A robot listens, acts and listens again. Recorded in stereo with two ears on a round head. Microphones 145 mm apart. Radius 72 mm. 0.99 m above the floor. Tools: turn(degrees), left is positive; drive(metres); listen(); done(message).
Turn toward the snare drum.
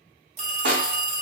turn(degrees=-60)
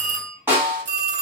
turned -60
turn(degrees=-15)
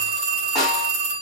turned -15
done("Found it: a snare drum, straight ahead.")